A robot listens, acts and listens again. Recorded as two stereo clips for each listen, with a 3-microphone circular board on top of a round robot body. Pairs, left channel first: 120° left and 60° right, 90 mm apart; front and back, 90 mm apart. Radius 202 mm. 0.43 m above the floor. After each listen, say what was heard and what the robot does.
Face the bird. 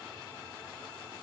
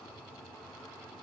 Keep listening.
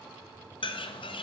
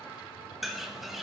The bird: 95° left. Turn 95° left.
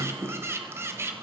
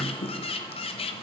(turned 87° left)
Facing the bird, 1 to 2 m away.